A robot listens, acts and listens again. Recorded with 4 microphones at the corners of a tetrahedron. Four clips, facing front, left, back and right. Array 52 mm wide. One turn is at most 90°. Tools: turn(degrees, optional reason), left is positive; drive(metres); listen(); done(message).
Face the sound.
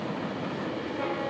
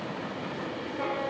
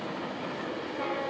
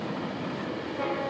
listen()
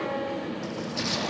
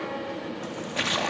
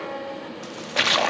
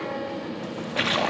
turn(degrees=-90, reason="The splash: 165° right.")
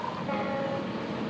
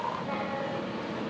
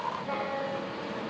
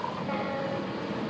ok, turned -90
turn(degrees=-75, reason="Nothing new. It was at 75° right.")
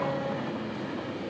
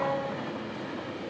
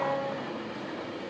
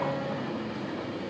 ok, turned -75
done("I heard a splash from this way, but can't make it out now.")